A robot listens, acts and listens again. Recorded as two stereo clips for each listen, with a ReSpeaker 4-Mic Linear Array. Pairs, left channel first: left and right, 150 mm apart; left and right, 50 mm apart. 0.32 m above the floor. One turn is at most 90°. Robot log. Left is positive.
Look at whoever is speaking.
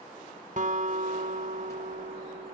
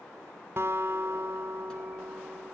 cmd idle
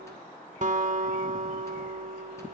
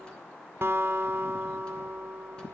cmd idle
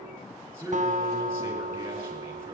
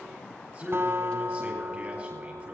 note: The man speaking: about 20° right or 160° right.
cmd yaw -20
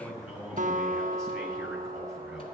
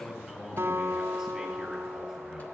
end: Found it: a man speaking, straight ahead.